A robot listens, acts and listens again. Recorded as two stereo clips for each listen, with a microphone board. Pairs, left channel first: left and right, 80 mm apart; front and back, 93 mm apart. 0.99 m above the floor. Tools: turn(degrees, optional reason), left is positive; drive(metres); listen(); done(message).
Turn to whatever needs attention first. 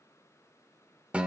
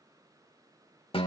listen()
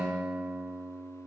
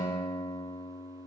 listen()
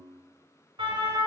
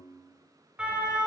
turn(degrees=-100, reason="The siren: 100° right.")
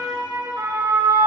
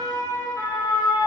turn(degrees=-50, reason="The siren is now 50° right.")
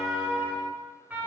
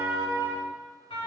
turn(degrees=-20, reason="The siren is now 20° right.")
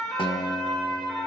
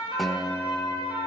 done("Facing the siren, over 4 m away.")